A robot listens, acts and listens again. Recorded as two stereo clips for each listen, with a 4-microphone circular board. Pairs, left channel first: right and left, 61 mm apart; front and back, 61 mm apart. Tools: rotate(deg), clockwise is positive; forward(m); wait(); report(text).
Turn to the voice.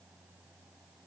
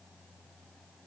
wait()
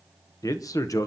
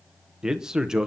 rotate(100)
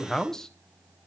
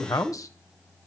report("Facing the man speaking.")